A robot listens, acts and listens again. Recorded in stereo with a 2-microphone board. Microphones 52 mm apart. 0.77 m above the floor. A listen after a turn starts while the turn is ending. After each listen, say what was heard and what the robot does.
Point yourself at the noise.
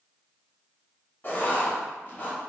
The writing: about 35° left or 145° left. Turn 35° left.
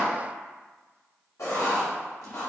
So it is at 105° left. Turn 105° left.
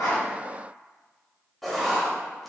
Facing the writing, under 1 m away.